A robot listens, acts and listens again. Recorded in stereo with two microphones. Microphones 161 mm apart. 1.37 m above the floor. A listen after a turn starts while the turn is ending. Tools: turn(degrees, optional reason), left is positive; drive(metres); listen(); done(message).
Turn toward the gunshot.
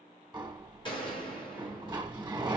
turn(degrees=30, reason="The gunshot: about 30° left or 150° left.")
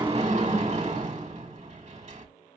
listen()
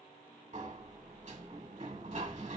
done("I heard a gunshot, but can't make it out now. It was about straight ahead or 120° left.")